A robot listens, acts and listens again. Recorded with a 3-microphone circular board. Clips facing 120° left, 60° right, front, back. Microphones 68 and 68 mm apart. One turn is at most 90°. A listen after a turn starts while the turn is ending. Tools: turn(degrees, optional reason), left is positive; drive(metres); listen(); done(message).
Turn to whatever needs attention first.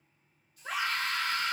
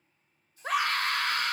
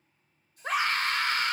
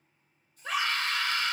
turn(degrees=-40, reason="The scream: 40° right.")
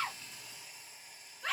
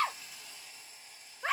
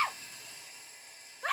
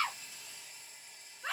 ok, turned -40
done("Facing the scream, under 1 m away.")